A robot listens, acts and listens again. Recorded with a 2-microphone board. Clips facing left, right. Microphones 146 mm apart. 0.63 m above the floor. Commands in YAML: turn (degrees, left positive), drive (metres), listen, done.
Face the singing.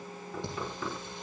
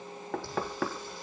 turn: 20
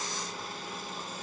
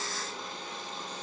listen: true
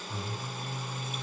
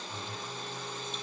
turn: 30
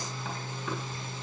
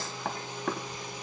turn: -15
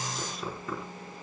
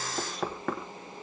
done: "Facing the singing."